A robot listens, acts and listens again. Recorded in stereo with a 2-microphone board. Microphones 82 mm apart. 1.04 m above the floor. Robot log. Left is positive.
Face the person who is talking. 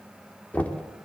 cmd idle
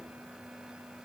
cmd idle
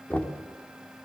end: I can't make out anyone speaking, only knocking.